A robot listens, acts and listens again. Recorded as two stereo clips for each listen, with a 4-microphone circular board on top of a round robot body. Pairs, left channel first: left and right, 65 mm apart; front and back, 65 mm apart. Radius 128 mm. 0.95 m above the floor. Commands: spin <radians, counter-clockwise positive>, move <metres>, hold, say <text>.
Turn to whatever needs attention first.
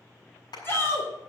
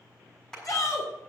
spin 0.61
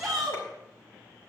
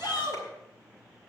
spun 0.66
say Found it: a shout, straight ahead, 2 to 4 m away.